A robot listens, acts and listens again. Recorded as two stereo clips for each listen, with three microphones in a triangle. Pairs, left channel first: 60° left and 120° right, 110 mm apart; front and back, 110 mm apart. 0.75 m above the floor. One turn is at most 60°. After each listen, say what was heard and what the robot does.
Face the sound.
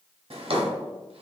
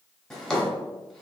The drawer: 85° right. Turn 60° right.
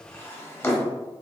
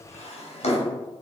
The drawer is now 10° right. Turn 10° right.
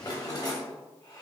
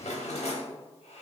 Found it: a drawer, straight ahead.